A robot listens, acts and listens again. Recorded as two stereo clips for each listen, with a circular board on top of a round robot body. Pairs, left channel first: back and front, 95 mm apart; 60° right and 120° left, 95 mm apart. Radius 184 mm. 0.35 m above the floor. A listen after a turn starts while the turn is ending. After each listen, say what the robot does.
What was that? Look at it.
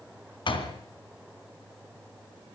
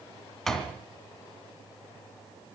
Turn 145° right.
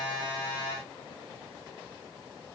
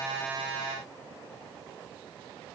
Facing where the door slam came from. I can't hear it now.